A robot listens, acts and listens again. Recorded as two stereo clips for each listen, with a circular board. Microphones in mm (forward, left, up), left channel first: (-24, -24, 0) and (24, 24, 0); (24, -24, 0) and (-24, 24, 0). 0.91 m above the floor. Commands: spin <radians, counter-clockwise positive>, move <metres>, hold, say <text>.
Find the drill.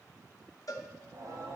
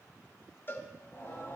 hold
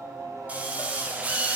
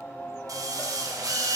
spin 1.92
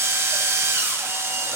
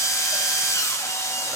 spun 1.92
say Found it: a drill, straight ahead.